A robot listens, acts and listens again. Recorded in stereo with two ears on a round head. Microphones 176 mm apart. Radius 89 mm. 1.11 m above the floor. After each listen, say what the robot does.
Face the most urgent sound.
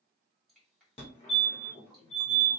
Turn 30° left.
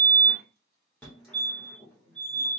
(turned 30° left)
Turn 10° left.
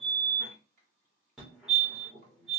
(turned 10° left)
Found it: a fire alarm, straight ahead, 2 to 4 m away.